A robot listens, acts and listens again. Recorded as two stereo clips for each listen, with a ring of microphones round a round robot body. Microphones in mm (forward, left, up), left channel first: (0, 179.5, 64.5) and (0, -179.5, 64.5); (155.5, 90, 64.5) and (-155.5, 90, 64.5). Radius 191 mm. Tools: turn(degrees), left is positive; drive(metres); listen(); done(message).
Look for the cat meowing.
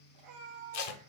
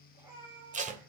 turn(degrees=-95)
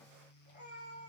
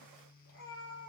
turn(degrees=30)
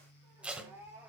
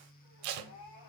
done("Facing the cat meowing.")